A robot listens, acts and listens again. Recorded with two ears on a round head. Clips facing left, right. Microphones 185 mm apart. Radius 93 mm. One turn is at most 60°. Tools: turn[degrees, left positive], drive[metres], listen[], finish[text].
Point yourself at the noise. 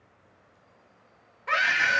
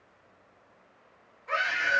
Action: turn[60]
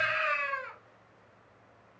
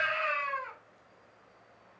Thought: So it is at 20° left.
Action: turn[20]
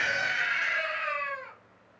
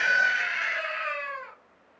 Action: finish[Facing the scream, under 1 m away.]